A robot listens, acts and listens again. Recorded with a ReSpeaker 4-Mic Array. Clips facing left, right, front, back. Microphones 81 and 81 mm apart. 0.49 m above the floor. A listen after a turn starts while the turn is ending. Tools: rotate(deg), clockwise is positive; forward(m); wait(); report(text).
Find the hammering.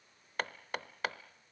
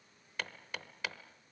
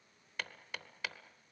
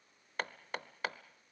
rotate(-135)
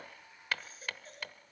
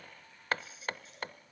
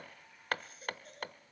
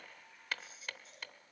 rotate(40)
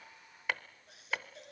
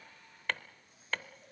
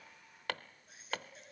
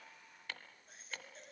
rotate(-10)
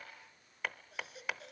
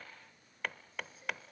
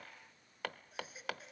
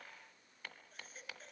report("Facing the hammering.")